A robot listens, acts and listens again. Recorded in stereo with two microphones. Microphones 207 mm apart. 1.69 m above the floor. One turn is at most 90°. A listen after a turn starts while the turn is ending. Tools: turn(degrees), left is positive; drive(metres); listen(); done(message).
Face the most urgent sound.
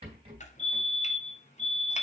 turn(degrees=30)
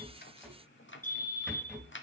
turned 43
turn(degrees=90)
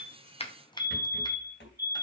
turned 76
turn(degrees=60)
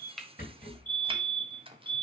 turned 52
turn(degrees=10)
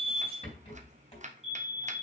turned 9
done("Facing the fire alarm, 2 to 4 m away.")